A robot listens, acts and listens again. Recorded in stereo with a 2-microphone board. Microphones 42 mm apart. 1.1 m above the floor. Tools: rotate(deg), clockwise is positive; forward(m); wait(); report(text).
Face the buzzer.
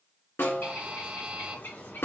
rotate(30)
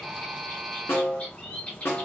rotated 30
report("Facing the buzzer.")